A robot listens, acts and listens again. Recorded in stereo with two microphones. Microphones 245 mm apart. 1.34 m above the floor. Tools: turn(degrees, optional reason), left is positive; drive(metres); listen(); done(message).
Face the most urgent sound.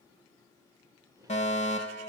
turn(degrees=25, reason="The fire alarm: about 25° left or 155° left.")
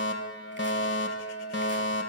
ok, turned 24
turn(degrees=125, reason="So it is at 125° left.")
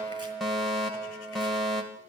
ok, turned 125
done("Found it: a fire alarm, straight ahead, 2 to 4 m away.")